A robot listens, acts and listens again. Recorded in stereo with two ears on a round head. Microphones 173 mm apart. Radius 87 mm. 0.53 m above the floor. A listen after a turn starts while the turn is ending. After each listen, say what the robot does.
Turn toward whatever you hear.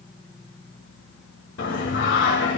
Turn 70° left.
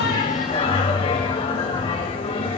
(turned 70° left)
Turn 30° left.
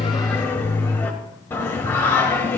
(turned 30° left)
Turn 15° left.
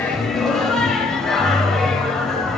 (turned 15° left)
Facing the singing, 2 to 4 m away.